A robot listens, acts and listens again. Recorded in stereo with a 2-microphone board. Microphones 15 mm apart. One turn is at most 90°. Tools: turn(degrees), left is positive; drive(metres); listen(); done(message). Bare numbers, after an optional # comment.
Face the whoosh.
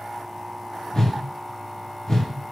# The whoosh: about 35° left or 145° left.
turn(35)
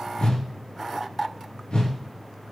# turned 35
# So it is at 110° left.
turn(90)
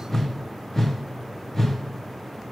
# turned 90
# The whoosh is now 20° left.
turn(20)
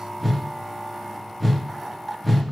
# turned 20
done("Facing the whoosh, under 1 m away.")